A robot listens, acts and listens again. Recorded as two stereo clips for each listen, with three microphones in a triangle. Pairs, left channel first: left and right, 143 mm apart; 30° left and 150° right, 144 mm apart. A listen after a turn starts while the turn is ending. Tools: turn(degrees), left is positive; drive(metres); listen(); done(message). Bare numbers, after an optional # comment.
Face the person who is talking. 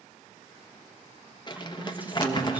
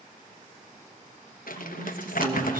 # The woman speaking: 170° right.
turn(-170)
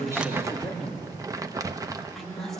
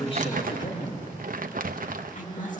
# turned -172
done("Facing the woman speaking.")